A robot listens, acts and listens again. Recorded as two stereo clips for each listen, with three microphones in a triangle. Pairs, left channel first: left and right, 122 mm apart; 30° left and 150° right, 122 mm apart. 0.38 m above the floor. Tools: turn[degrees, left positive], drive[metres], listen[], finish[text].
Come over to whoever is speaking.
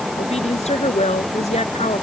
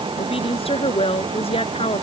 Thought: The woman speaking: 65° left.
Action: turn[65]
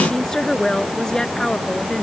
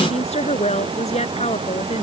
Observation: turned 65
Action: drive[1.0]
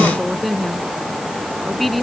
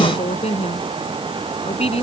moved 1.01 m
Action: drive[1.0]
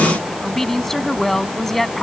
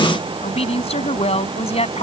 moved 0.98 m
Action: drive[1.0]
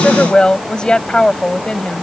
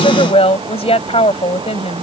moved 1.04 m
Thought: The woman speaking is now 10° left.
Action: turn[10]
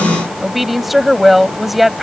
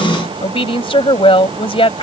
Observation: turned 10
Action: drive[1.0]
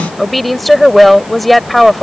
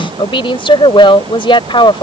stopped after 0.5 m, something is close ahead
Action: finish[Arrived at the woman speaking, straight ahead.]